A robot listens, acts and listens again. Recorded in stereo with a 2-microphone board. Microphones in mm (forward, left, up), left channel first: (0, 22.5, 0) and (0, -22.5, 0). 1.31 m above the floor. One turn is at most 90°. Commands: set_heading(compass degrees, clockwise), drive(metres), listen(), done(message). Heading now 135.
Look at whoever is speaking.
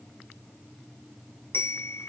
listen()
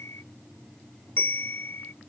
listen()
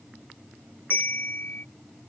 done("I can't make out anyone speaking, only a bell.")